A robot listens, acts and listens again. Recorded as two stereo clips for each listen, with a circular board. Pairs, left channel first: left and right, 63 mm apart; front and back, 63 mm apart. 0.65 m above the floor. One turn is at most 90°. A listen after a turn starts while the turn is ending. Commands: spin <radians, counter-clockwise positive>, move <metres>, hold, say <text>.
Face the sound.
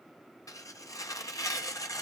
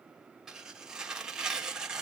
spin 1.57
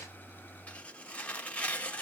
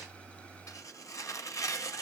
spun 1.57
spin 0.44
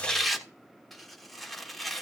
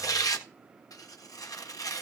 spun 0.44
say Facing the tearing paper.